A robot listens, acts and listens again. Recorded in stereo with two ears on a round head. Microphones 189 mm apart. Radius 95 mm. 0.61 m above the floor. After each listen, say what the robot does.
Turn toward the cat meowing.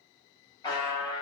Keep listening.
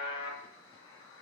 Keep listening.
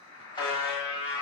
I can't make out a cat meowing, only a buzzer.